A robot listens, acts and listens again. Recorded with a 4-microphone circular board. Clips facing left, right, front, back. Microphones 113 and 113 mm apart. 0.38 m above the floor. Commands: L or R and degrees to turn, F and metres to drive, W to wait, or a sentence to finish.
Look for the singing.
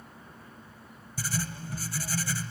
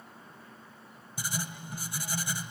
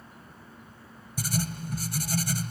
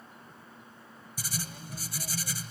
W
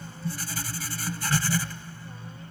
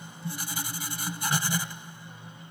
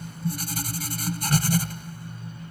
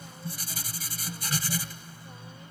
W
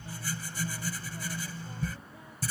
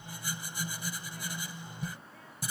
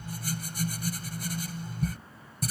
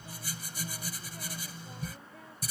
I can't make out singing, only writing.